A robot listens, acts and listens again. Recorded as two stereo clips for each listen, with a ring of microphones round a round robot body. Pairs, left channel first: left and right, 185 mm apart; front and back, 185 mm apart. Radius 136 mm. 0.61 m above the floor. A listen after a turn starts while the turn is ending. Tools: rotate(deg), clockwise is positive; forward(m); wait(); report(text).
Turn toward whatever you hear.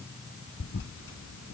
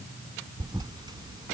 rotate(-110)
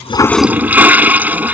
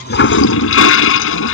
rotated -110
rotate(10)
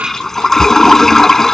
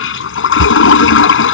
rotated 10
report("Found it: a toilet flushing, straight ahead.")